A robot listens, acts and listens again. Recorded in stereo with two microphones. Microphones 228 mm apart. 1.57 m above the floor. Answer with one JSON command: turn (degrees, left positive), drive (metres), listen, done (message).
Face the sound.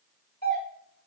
{"turn": 40}
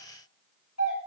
{"turn": 100}
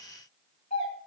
{"turn": 35}
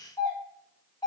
{"turn": 15}
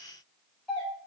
{"done": "Found it: a doorbell, straight ahead."}